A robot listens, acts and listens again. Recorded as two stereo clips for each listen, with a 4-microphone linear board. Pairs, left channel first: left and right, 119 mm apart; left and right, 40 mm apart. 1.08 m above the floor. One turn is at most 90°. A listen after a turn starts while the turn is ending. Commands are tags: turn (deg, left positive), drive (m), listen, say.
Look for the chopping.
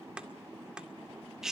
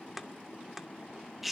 <turn deg="-30"/>
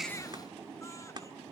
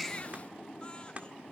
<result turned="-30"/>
<listen/>
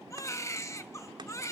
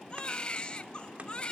<listen/>
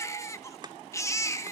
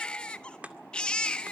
<turn deg="-90"/>
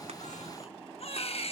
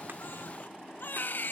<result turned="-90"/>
<turn deg="-55"/>
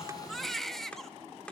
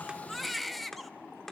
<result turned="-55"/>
<turn deg="10"/>
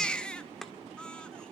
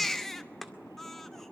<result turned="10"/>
<say>Facing the chopping, 2 to 4 m away.</say>